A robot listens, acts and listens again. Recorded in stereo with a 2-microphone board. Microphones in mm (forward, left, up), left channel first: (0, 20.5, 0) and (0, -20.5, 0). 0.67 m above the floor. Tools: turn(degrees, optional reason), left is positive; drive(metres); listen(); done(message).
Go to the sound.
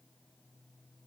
listen()
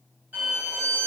turn(degrees=-40, reason="The violin: about 40° right or 140° right.")
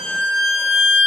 turn(degrees=-100, reason="So it is at 100° right.")
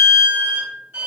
turn(degrees=-35, reason="The violin is now 35° right.")
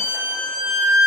turn(degrees=-10, reason="The violin is now 10° right.")
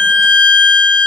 drive(metres=1.0)
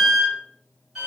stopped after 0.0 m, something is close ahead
turn(degrees=-10, reason="The violin is now 10° right.")
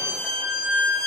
done("Something is in my way. I am facing the violin but have not reached it.")